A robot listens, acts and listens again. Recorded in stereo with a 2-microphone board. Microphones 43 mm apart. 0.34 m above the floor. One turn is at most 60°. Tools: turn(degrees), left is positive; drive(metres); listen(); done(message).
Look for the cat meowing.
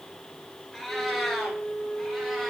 turn(degrees=30)
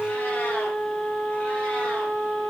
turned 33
listen()
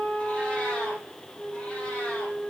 listen()
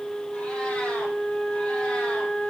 done("I heard a cat meowing, but can't make it out now. It was about 30° right or 145° left.")